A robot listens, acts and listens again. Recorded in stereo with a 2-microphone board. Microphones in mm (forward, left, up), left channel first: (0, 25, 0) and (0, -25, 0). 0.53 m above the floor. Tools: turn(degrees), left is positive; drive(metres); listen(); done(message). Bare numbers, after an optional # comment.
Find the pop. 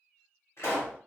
# The pop: about 60° left or 120° left.
turn(60)
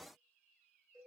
listen()
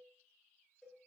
done("I heard a pop, but can't make it out now. It was about straight ahead or 60° left.")